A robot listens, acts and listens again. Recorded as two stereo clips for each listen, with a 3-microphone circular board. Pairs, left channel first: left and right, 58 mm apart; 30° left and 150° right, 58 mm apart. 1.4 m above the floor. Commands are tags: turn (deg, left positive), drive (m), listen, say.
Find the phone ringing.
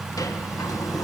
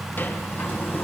<listen/>
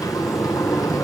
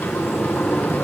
<listen/>
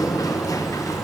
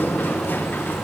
<say>I can't make out a phone ringing to turn to.</say>